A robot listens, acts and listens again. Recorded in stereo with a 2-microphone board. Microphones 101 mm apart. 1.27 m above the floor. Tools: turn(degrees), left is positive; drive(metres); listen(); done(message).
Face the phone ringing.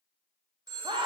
turn(degrees=-45)
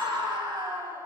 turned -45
listen()
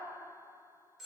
done("Found it: a phone ringing, straight ahead, 1 to 2 m away.")